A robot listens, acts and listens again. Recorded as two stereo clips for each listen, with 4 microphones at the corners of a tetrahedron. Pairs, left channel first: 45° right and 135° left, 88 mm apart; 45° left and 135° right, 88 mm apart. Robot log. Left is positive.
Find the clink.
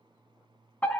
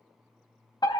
cmd idle
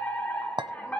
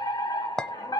note: The clink: 125° left.
cmd yaw +125
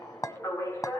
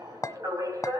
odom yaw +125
end: Facing the clink.